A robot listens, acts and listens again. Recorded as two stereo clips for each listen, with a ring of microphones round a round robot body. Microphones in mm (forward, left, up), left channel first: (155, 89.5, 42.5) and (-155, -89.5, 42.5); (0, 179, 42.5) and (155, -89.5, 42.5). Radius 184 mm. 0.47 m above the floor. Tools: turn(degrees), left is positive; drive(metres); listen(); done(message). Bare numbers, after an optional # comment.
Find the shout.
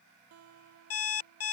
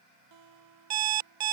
listen()
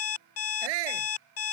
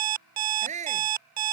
# The shout: 130° right.
turn(-130)
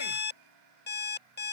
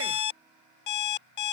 listen()
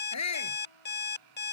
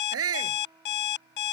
# The shout is now 15° right.
turn(-15)
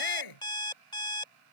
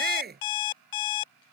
done("Facing the shout.")